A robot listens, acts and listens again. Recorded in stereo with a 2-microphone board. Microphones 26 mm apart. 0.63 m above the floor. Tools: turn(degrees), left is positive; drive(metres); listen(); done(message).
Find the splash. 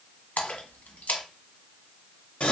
turn(degrees=70)
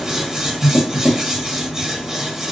listen()
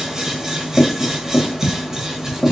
done("I heard a splash, but can't make it out now. It was about straight ahead or 40° left.")